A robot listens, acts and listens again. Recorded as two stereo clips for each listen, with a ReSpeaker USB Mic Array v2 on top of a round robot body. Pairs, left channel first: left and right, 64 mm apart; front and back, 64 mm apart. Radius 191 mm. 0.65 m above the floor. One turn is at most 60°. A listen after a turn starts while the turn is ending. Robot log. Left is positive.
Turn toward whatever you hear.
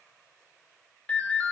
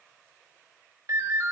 note: The ringtone: 155° left.
cmd yaw +60
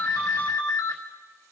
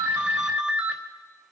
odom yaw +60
note: The ringtone is now 110° left.
cmd yaw +60
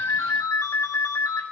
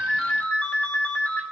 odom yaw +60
note: The ringtone is now 65° left.
cmd yaw +60
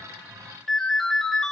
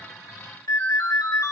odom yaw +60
note: The ringtone is now 10° left.
cmd yaw +10
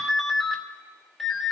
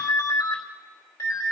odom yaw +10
end: Facing the ringtone, 2 to 4 m away.